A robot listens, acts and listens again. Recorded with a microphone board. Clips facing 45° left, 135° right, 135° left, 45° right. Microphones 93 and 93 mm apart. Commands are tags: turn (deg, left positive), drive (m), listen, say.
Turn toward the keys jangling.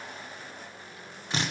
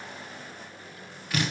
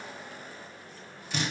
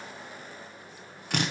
<listen/>
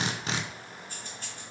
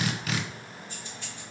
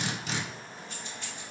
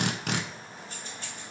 <say>Facing the keys jangling.</say>